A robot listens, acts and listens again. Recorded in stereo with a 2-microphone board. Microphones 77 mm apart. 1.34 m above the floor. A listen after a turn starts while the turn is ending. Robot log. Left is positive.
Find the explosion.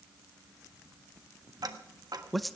cmd idle
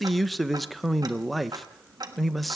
cmd idle
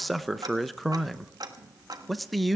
end: I can't make out an explosion, only ticking and a man speaking.